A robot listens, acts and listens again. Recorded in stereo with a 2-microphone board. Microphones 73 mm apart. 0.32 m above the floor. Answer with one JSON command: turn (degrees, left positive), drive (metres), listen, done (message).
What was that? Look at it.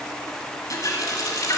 {"turn": 55}
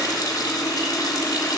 {"turn": 65}
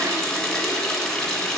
{"done": "Facing the running tap, 1 to 2 m away."}